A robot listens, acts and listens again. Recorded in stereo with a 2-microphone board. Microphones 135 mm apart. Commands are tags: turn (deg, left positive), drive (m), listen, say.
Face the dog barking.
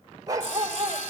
<turn deg="-30"/>
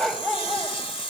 <say>Found it: a dog barking, straight ahead.</say>